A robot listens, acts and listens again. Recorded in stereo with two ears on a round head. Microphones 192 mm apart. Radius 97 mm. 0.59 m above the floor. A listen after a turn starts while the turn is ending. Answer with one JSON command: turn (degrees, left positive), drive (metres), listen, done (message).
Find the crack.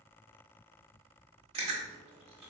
{"listen": true}
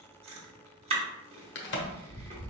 {"turn": 55}
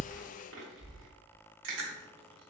{"listen": true}
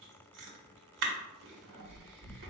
{"done": "I heard a crack, but can't make it out now. It was about straight ahead or 70° left."}